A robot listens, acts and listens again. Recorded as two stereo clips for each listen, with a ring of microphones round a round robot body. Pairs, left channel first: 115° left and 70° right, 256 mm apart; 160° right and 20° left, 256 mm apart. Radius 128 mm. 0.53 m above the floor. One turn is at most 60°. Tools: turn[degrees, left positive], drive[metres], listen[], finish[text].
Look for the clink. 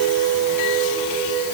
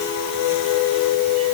Action: listen[]
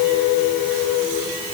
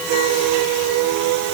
Action: listen[]
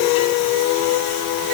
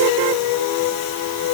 Action: finish[I can't make out a clink.]